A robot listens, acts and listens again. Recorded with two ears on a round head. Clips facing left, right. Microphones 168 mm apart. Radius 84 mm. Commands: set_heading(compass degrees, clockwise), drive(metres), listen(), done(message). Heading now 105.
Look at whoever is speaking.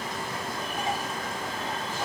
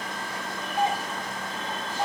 listen()
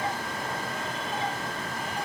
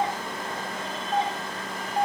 listen()
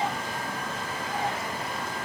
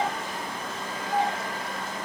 done("I can't make out anyone speaking to turn to.")